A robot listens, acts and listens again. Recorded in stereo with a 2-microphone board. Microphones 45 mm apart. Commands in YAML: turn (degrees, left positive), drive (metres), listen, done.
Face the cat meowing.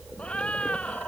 turn: 30
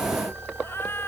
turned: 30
turn: 120
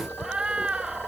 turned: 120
turn: -20
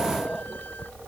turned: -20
listen: true
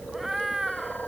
done: "Facing the cat meowing."